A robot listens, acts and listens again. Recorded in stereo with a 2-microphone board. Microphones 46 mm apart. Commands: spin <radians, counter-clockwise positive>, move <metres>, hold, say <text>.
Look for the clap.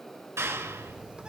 spin -1.57
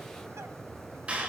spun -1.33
spin -0.44
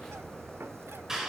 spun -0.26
spin -0.17
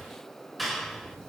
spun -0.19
say Facing the clap, over 4 m away.